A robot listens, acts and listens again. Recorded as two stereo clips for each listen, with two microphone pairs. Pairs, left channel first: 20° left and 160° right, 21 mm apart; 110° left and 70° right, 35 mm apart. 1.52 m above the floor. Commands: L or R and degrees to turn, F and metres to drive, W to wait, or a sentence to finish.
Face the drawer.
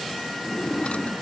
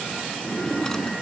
L35
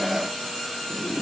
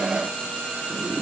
Facing the drawer.